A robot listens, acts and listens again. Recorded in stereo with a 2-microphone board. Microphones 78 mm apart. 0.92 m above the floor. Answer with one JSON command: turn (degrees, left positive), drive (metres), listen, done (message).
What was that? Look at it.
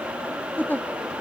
{"turn": 20}
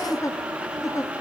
{"turn": 135}
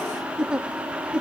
{"turn": -10}
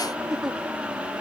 {"done": "Facing the giggle."}